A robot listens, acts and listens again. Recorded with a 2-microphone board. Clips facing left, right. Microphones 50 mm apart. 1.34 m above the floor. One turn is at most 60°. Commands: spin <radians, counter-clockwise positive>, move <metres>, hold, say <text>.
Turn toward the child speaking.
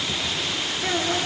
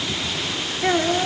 spin -0.61
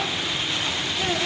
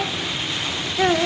spin -1.05
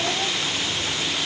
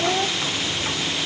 spin -0.79
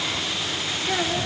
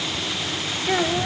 spin -0.35
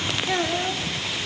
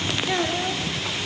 say Found it: a child speaking, straight ahead, 2 to 4 m away.